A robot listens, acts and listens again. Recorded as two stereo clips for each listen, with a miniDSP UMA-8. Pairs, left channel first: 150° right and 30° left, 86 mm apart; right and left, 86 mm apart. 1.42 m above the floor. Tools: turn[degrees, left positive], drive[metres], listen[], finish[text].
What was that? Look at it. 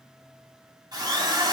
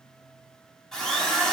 Action: finish[Facing the drill, 2 to 4 m away.]